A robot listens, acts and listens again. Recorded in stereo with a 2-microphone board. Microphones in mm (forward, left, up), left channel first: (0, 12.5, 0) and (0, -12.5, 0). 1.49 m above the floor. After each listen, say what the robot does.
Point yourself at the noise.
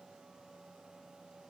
Keep listening.
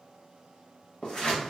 Turn 40° left.
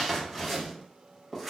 Facing the scissors.